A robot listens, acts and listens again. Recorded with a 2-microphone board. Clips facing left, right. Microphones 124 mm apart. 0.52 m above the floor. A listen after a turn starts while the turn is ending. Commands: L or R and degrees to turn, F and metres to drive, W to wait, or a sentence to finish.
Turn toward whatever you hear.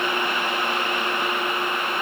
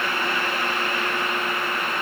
W
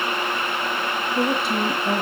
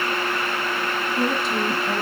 L70
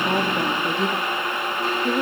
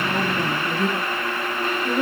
L20
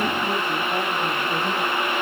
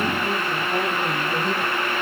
Found it: a woman speaking, straight ahead, 2 to 4 m away.